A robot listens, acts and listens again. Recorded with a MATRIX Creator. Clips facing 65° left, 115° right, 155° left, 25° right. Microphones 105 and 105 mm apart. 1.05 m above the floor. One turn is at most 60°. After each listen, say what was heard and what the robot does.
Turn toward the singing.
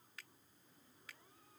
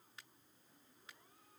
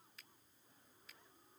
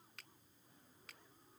Keep listening.
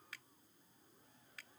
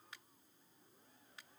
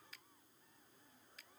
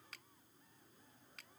Keep listening.
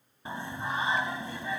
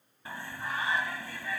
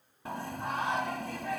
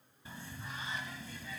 The singing: 135° left. Turn 60° left.
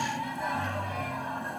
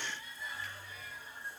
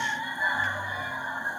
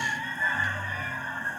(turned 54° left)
The singing is now 80° left. Turn 60° left.
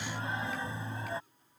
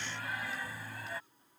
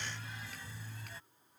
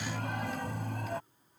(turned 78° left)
Facing the singing.